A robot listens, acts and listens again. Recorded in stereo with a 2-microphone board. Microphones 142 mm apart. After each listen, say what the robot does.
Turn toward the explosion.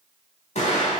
Turn 50° left.
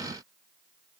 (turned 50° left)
Keep listening.
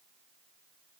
I heard an explosion, but can't make it out now. It was about straight ahead or 80° left.